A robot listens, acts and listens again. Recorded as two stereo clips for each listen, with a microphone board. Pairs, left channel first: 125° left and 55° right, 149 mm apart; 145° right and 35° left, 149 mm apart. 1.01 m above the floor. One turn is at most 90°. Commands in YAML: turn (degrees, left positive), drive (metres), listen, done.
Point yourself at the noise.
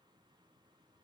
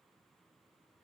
listen: true
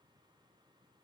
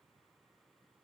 listen: true
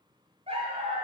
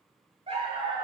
turn: -20
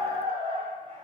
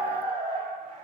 done: "Found it: a dog barking, straight ahead, 1 to 2 m away."